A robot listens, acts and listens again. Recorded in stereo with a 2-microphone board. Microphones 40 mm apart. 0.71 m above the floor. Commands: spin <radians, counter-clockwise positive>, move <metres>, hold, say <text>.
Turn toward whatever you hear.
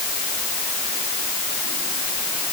hold
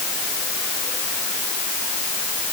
hold
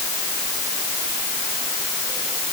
say I can't make out anything.